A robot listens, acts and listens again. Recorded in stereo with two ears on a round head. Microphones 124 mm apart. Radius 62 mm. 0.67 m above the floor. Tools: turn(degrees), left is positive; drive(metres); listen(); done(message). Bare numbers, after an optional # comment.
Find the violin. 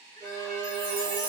turn(-90)
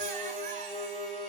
done("Found it: a violin, straight ahead.")